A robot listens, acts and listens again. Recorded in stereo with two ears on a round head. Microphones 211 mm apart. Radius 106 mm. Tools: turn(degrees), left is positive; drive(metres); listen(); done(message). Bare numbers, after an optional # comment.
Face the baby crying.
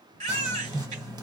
# The baby crying: about 30° right or 150° right.
turn(-30)
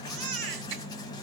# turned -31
# So it is at 115° right.
turn(-115)
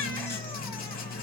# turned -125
# Nothing new. It was at 10° left.
turn(10)
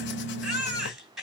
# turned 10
done("Facing the baby crying.")